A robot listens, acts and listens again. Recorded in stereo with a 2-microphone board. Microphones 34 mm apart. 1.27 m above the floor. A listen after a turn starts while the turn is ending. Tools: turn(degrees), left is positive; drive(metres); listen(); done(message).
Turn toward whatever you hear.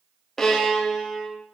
turn(degrees=30)
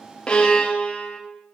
turn(degrees=135)
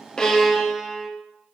done("Found it: a violin, straight ahead.")